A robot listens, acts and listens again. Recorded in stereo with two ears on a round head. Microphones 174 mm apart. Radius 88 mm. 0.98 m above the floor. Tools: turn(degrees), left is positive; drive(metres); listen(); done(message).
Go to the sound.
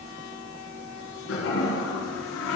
turn(degrees=90)
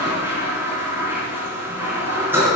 turn(degrees=-10)
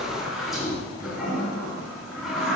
drive(metres=1.0)
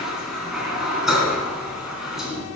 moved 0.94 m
drive(metres=1.0)
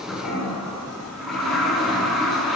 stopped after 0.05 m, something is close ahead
done("Blocked. The toilet flushing is further on, straight ahead.")